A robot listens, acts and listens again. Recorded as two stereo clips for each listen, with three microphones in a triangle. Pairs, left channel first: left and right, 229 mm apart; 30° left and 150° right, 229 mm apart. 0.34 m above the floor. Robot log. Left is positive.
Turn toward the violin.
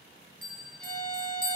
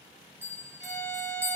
note: The violin: 10° left.
cmd yaw +10
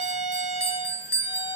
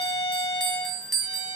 end: Found it: a violin, straight ahead.